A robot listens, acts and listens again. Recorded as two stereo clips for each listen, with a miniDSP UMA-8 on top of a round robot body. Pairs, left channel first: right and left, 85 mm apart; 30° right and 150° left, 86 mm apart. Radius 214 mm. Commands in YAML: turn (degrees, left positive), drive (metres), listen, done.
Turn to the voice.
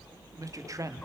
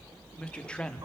turn: 45
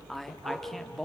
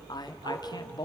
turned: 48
done: "Found it: a man speaking, straight ahead."